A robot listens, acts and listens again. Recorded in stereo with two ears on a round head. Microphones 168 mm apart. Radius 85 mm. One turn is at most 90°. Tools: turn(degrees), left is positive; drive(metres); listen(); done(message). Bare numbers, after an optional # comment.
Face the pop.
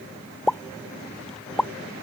turn(30)
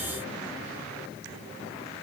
listen()
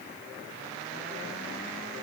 done("I heard a pop, but can't make it out now. It was about 25° right or 145° left.")